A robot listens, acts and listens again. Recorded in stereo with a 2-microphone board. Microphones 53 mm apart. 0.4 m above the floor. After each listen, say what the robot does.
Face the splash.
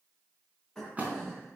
Turn 30° right.
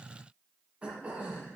Keep listening.
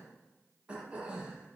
I heard a splash, but can't make it out now. It was about straight ahead or 120° right.